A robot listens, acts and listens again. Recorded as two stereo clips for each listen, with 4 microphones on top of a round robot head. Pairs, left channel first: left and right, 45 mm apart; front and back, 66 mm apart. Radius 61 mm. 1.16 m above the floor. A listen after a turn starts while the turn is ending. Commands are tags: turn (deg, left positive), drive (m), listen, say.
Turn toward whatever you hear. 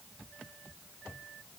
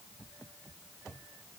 <listen/>
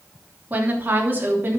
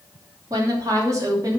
<turn deg="-135"/>
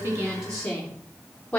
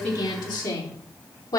<turn deg="15"/>
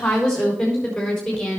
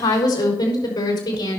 <say>Facing the woman speaking, over 4 m away.</say>